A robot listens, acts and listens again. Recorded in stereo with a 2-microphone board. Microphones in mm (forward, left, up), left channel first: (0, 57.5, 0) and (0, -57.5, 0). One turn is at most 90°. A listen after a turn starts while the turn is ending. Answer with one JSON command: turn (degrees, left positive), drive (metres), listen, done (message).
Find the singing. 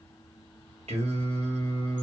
{"turn": -70}
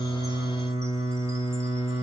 {"turn": -20}
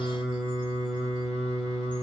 {"done": "Facing the singing."}